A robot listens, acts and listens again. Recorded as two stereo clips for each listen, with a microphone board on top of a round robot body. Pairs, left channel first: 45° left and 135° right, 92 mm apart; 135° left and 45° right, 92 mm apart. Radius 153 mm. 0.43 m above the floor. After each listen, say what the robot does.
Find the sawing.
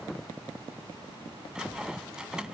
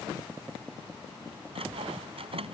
Turn 55° right.
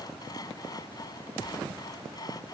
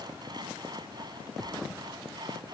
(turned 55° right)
Facing the sawing.